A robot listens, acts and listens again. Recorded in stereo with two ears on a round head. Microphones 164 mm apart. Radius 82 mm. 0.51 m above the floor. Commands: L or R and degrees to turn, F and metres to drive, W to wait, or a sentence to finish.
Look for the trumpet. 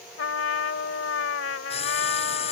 L75
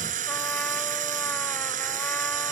W
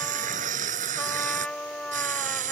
Facing the trumpet.